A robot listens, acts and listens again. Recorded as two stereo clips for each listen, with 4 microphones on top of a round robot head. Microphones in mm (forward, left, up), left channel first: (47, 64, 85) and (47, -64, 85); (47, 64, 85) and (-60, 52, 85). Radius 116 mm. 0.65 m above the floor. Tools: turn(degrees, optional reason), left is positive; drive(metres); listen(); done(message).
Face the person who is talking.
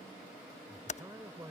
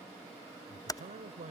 turn(degrees=-165, reason="The man speaking: 165° right.")
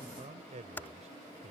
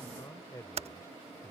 turn(degrees=-60, reason="The man speaking is now 60° right.")
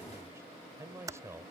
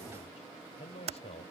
turn(degrees=-20, reason="The man speaking is now 20° right.")
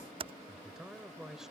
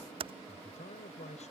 done("Facing the man speaking.")